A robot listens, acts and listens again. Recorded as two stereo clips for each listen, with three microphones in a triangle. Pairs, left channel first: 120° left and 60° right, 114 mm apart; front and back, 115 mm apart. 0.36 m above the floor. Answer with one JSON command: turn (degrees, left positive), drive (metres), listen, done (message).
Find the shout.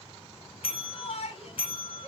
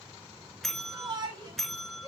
{"turn": 135}
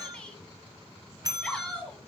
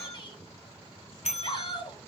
{"turn": 40}
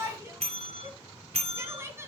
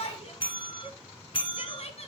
{"done": "Found it: a shout, straight ahead."}